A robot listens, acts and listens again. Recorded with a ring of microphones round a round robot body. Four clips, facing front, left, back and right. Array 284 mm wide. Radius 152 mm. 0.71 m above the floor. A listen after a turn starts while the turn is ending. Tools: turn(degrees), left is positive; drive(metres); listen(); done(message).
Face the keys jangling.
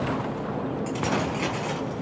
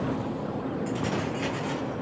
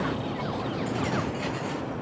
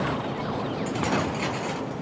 turn(degrees=-40)
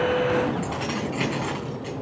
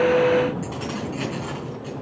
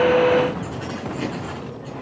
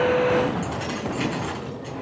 done("Found it: keys jangling, straight ahead.")